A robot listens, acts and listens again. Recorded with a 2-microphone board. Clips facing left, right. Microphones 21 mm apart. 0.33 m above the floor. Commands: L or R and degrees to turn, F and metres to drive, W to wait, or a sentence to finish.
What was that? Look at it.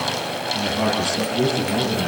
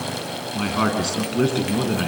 R45
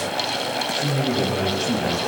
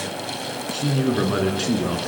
R105
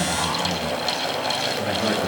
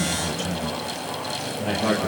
Facing the man speaking, over 4 m away.